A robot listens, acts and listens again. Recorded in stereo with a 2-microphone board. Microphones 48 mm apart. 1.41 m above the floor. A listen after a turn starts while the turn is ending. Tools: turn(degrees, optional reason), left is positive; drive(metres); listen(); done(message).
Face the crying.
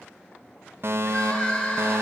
turn(degrees=25, reason="The crying: about 25° left or 155° left.")
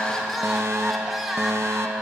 done("Facing the crying.")